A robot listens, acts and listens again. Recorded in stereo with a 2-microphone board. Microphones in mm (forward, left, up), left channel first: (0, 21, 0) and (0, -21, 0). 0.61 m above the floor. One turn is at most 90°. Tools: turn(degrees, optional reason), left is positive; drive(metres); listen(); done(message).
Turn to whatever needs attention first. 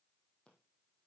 listen()
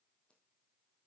listen()
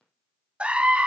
turn(degrees=-30, reason="The scream: about 30° right or 150° right.")
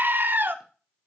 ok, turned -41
turn(degrees=-90, reason="So it is at 105° right.")
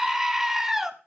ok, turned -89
turn(degrees=-15, reason="The scream is now 15° right.")
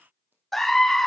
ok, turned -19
done("Found it: a scream, straight ahead, under 1 m away.")